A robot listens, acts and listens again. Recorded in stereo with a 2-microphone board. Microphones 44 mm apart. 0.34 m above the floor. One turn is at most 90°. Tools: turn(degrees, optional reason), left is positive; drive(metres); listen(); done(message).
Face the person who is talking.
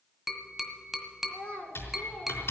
turn(degrees=20, reason="The child speaking: about 20° left or 160° left.")
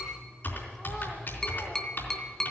listen()
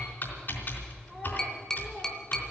listen()
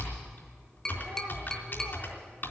done("I heard a child speaking, but can't make it out now. It was about straight ahead or 140° left.")